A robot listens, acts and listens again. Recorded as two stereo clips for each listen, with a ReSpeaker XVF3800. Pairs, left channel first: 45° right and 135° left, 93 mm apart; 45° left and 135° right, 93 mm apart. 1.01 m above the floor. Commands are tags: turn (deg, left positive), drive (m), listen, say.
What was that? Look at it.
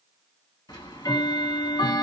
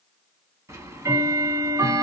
<turn deg="-85"/>
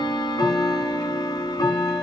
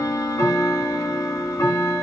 <turn deg="-10"/>
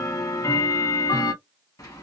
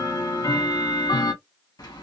<say>Found it: ticking, straight ahead, under 1 m away.</say>